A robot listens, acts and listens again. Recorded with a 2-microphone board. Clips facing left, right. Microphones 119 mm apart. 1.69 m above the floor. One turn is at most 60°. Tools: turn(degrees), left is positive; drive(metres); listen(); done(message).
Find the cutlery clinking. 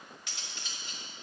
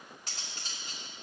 turn(degrees=-40)
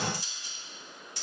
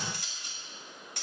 turn(degrees=-60)
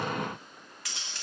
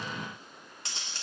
turn(degrees=-30)
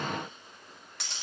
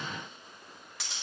done("Facing the cutlery clinking.")